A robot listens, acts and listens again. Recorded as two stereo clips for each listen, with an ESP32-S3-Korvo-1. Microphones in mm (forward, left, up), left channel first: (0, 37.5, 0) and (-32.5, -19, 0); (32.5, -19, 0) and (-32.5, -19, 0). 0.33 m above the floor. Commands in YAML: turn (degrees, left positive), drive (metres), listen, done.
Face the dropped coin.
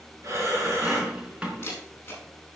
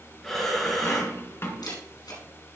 turn: -45
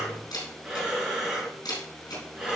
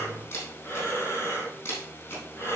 done: "I heard a dropped coin from this way, but can't make it out now."